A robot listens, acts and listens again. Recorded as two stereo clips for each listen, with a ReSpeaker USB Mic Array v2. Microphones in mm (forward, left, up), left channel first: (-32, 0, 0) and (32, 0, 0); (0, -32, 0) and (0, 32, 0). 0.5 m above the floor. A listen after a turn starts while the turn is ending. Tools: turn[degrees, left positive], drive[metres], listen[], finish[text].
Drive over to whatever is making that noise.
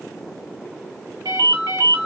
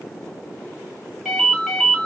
Action: drive[1.0]
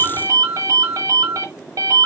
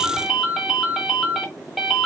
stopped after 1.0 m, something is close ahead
Action: finish[I am next to the ringtone.]